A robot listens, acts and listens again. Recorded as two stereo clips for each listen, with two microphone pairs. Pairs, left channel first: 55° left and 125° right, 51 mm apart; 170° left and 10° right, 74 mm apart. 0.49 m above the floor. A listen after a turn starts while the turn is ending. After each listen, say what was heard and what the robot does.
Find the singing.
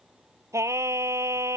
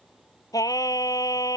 The singing: 150° right. Turn 150° right.
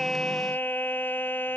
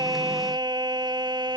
Found it: singing, straight ahead.